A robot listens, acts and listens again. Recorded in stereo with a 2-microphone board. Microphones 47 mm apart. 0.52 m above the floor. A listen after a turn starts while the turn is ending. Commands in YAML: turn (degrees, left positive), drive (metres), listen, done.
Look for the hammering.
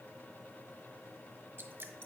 listen: true
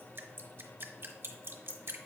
listen: true
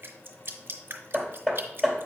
turn: 30
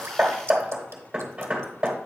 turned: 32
turn: -20
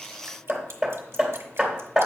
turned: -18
done: "Facing the hammering."